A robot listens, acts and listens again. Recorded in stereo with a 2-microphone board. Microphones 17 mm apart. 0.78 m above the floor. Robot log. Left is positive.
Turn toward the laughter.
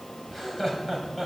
cmd yaw +30
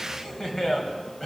note: So it is at 145° left.
cmd yaw +145
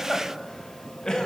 note: The laughter is now 45° left.
cmd yaw +45
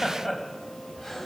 end: Found it: laughter, straight ahead.